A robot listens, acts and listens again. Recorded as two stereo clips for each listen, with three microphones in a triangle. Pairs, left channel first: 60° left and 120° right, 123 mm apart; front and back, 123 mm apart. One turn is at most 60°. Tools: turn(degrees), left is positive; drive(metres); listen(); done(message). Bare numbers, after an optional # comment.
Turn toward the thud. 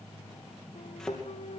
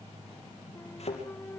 # The thud: 25° right.
turn(-25)
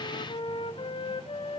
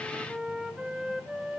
done("Facing where the thud came from. I can't hear it now.")